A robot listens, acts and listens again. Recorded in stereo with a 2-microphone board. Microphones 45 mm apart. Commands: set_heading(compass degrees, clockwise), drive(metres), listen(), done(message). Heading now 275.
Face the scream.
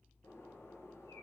listen()
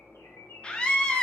set_heading(255)
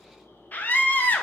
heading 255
set_heading(115)
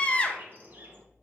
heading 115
set_heading(90)
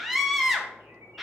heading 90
done("Facing the scream.")